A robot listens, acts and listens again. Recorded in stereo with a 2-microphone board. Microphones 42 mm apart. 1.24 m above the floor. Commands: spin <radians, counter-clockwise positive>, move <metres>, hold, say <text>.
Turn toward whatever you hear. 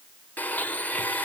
spin 0.79
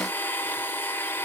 spin 1.40
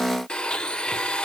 spin 0.44
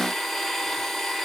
say Found it: a blender, straight ahead, 1 to 2 m away.